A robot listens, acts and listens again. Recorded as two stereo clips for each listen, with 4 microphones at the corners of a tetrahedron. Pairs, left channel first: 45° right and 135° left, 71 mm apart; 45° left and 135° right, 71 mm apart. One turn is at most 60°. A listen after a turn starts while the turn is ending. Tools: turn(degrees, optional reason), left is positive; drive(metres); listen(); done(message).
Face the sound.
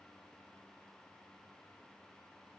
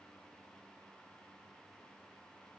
listen()
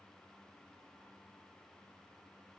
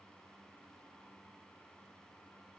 listen()
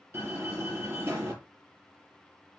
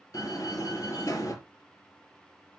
turn(degrees=60, reason="The door slam: 85° left.")
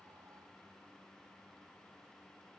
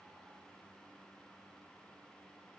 turn(degrees=25, reason="Nothing new. It was at 25° left.")
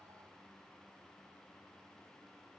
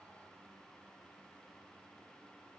done("Facing where the door slam came from. I can't hear it now.")